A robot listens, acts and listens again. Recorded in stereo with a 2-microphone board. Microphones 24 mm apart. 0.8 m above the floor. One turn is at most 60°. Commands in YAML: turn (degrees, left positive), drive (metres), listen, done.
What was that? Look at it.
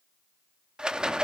turn: -40
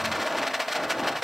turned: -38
done: "Found it: a rattle, straight ahead, under 1 m away."